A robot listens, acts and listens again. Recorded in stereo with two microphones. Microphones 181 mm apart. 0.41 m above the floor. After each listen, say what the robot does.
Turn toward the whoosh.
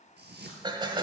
Turn 70° right.
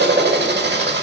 Keep listening.
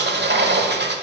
Keep listening.
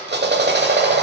I heard a whoosh, but can't make it out now. It was about straight ahead or 40° right.